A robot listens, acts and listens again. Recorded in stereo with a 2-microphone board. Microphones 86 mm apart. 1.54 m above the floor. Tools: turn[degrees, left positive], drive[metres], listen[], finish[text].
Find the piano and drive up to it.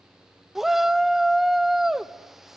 Action: listen[]
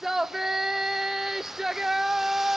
Action: listen[]
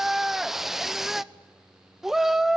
Action: finish[I can't make out a piano, only a shout.]